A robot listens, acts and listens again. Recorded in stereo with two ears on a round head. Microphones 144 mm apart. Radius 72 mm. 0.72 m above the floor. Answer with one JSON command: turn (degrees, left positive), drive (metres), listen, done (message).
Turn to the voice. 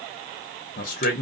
{"turn": 50}
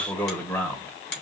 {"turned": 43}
{"turn": 10}
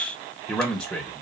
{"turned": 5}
{"done": "Facing the man speaking."}